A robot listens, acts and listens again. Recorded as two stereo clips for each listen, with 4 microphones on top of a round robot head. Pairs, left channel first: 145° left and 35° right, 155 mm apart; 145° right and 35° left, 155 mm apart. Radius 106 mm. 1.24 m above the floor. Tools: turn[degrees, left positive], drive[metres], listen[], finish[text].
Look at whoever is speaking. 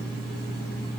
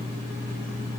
Action: listen[]
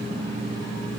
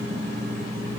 Action: listen[]
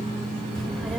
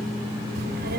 Thought: The child speaking: 60° left.
Action: turn[60]
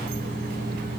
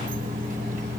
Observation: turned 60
Action: finish[Facing the child speaking.]